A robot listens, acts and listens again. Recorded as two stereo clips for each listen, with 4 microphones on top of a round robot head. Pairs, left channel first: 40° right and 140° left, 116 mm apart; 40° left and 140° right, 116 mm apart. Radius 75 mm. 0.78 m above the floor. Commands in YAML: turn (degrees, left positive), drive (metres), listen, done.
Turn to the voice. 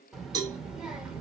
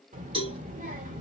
turn: -135
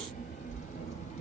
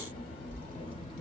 turn: -10
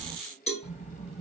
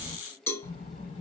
done: "Facing the child speaking, 2 to 4 m away."